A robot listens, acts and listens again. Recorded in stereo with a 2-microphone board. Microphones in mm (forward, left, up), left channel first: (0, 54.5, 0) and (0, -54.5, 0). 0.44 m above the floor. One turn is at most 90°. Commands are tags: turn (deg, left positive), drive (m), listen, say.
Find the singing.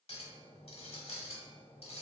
<listen/>
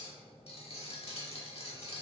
<listen/>
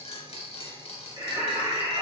<turn deg="-45"/>
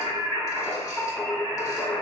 <say>Found it: singing, straight ahead, 2 to 4 m away.</say>